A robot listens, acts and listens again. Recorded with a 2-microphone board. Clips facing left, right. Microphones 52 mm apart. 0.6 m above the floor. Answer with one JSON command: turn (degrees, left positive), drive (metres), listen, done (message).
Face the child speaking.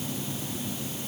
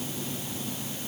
{"listen": true}
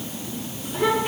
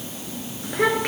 {"turn": -90}
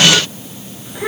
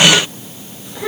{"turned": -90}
{"turn": 20}
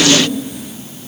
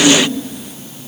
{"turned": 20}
{"done": "Found it: a child speaking, straight ahead."}